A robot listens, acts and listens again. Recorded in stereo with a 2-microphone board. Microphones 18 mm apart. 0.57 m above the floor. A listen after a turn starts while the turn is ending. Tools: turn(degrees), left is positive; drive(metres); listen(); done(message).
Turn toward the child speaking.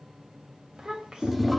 turn(degrees=-40)
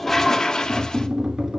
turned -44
listen()
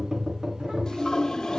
listen()
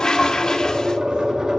done("I heard a child speaking, but can't make it out now. It was about 5° left or 95° right.")